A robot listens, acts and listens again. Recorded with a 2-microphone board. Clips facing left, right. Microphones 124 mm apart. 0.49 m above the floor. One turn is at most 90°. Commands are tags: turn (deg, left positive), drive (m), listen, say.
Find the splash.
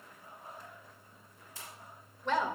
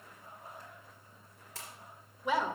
<turn deg="-90"/>
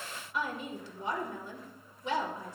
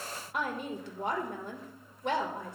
<say>Facing where the splash came from. I can't hear it now.</say>